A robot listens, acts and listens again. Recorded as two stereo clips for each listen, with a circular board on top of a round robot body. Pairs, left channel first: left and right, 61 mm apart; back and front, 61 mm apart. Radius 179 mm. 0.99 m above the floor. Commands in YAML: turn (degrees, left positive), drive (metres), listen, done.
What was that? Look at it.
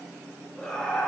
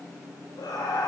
turn: 165
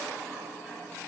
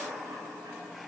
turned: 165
listen: true
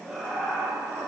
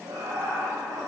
turn: -10
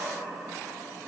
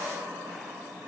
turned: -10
done: "Found it: laughter, straight ahead, 2 to 4 m away."